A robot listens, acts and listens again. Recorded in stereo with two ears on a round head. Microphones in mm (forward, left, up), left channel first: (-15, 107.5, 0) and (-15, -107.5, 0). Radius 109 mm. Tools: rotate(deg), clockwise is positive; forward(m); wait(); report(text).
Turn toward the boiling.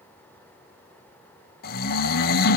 wait()
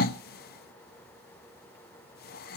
wait()
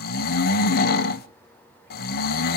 report("I can't make out boiling to turn to.")